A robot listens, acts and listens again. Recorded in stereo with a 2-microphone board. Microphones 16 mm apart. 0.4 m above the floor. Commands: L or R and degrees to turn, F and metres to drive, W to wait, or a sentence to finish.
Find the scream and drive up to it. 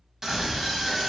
R30
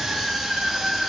R115
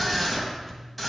L10
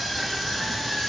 F1.0
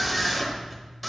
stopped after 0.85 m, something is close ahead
I am next to the scream.